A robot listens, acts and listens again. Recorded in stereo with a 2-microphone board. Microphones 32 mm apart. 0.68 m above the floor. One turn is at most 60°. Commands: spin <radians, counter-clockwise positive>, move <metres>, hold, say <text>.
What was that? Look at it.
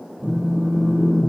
spin -1.05
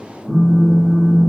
say Facing the phone buzzing.